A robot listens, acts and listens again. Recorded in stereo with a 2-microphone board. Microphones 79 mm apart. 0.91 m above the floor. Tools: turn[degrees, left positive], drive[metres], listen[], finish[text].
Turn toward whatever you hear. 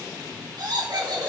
Thought: The laughter: about 60° right or 120° right.
Action: turn[-60]
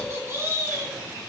Thought: So it is at 25° right.
Action: turn[-25]
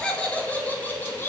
Thought: The laughter is now 30° left.
Action: turn[30]
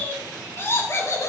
Thought: The laughter is now 40° left.
Action: turn[40]
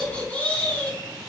Thought: The laughter is now 25° left.
Action: turn[25]
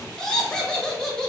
Thought: The laughter is now 10° left.
Action: turn[10]
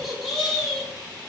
Action: finish[Facing the laughter, 1 to 2 m away.]